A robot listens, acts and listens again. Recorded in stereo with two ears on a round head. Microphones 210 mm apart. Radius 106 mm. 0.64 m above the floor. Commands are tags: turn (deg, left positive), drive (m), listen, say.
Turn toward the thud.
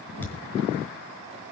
<turn deg="30"/>
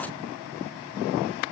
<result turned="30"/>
<listen/>
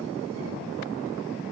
<say>I heard a thud, but can't make it out now. It was about 20° right or 140° left.</say>